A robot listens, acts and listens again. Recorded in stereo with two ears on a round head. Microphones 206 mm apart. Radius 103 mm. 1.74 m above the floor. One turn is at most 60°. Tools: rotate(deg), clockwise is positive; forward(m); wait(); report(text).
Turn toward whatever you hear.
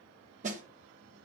rotate(35)
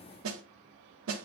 rotate(60)
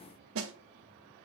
rotate(60)
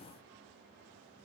wait()
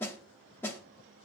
rotate(-10)
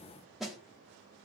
report("Found it: a snare drum, straight ahead.")